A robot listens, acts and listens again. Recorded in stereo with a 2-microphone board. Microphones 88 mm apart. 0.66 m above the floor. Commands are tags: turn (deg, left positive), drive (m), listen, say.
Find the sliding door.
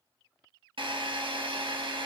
<listen/>
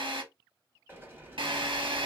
<turn deg="-25"/>
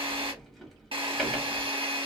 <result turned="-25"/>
<say>Facing the sliding door.</say>